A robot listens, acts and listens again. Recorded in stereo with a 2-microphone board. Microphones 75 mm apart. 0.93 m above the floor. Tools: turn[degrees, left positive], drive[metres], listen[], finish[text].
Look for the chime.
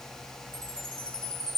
Action: turn[90]
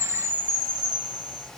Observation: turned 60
Thought: So it is at 30° left.
Action: turn[30]
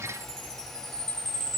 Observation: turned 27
Action: finish[Facing the chime, over 4 m away.]